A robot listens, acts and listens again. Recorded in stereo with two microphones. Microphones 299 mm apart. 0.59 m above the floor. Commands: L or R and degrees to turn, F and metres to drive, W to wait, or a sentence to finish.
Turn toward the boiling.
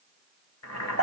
L60
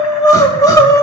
W
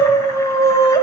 W
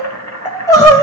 L60
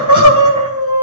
W
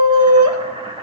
R20
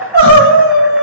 W
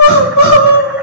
W
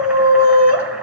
I heard boiling from this way, but can't make it out now.